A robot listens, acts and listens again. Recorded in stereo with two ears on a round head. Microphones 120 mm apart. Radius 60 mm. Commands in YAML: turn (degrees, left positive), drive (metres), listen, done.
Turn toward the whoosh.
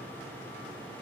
listen: true
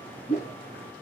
turn: 70
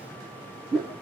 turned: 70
done: "Found it: a whoosh, straight ahead, 2 to 4 m away."